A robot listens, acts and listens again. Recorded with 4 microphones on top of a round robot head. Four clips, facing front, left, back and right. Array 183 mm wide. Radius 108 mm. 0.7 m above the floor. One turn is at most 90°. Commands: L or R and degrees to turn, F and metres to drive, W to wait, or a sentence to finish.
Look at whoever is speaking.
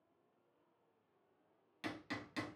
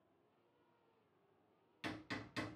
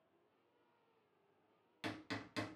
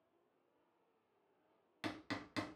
W
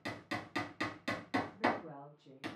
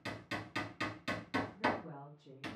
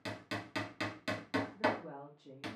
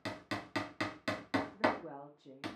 R90
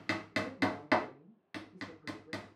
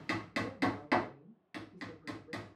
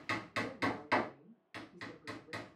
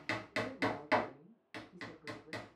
R70
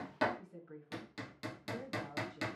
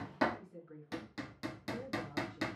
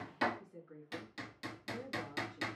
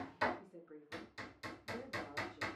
Found it: a woman speaking, straight ahead, 1 to 2 m away.